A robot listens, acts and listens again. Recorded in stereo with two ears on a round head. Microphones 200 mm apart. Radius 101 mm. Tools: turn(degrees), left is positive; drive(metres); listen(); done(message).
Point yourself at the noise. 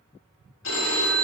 turn(degrees=90)
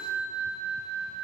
done("Facing the phone ringing, 2 to 4 m away.")